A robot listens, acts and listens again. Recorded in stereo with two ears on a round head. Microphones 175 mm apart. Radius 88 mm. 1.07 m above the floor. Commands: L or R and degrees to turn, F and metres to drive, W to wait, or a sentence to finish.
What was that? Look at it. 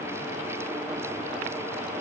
W
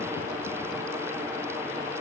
W
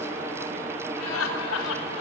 L90
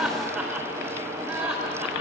R10
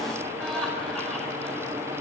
Found it: laughter, straight ahead, over 4 m away.